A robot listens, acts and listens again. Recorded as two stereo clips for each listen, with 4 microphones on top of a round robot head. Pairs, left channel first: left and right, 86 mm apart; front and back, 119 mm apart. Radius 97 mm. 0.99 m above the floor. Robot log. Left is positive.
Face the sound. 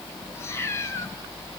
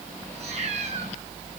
note: The cat meowing: 150° left.
cmd yaw +150
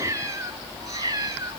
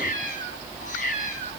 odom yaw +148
note: The cat meowing is now 40° right.
cmd yaw -40
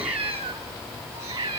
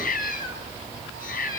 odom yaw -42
note: The cat meowing is now 25° right.
cmd yaw -25
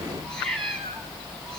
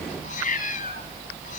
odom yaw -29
end: Found it: a cat meowing, straight ahead.